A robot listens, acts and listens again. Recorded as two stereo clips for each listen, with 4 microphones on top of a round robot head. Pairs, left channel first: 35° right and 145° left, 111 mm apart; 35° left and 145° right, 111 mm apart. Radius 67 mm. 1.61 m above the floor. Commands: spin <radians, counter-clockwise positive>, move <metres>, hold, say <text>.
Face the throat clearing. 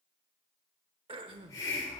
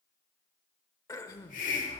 spin 1.75
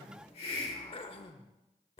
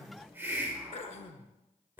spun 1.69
say Facing the throat clearing, under 1 m away.